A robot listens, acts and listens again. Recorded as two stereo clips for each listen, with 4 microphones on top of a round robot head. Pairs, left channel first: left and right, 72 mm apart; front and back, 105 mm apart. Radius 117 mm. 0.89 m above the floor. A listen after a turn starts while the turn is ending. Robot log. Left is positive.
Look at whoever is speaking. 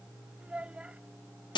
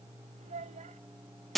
note: The child speaking: 165° right.
cmd yaw -165
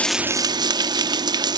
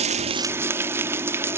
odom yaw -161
cmd idle
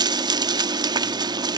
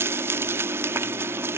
cmd idle
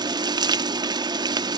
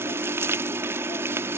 end: I heard a child speaking from this way, but can't make it out now.